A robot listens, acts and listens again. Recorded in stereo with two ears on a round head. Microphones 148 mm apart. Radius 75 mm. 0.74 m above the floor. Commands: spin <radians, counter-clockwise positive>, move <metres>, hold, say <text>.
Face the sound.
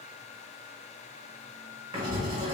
spin -0.52
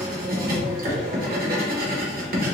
spin -2.09
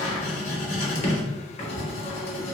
spin 0.70
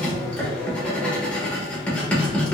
spin 0.17
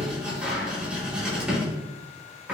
say Facing the writing.